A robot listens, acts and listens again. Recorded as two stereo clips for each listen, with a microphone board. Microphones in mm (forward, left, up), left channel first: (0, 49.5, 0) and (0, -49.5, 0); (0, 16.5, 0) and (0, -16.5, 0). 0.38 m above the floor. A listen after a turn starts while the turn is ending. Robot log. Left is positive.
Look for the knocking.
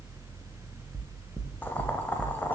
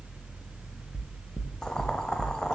note: The knocking: about 55° right or 125° right.
cmd yaw -55
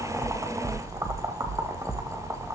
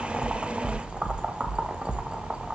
note: So it is at 50° right.
cmd yaw -50
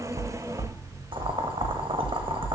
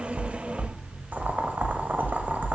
note: The knocking is now 25° left.
cmd yaw +25
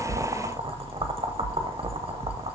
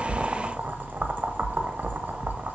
note: The knocking is now 10° left.
cmd yaw +10
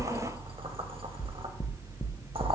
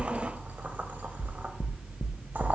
end: Facing the knocking.